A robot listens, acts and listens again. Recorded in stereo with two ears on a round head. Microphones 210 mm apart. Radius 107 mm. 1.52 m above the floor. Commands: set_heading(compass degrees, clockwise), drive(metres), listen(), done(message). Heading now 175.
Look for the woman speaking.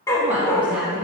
set_heading(145)
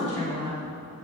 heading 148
set_heading(3)
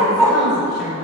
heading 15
done("Facing the woman speaking, 2 to 4 m away.")